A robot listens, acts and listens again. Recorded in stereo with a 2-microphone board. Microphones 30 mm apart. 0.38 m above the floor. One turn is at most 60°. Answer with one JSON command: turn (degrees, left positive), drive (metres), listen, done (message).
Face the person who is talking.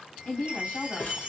{"turn": 60}
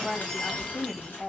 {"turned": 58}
{"turn": 25}
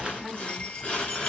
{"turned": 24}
{"done": "Facing the woman speaking, 2 to 4 m away."}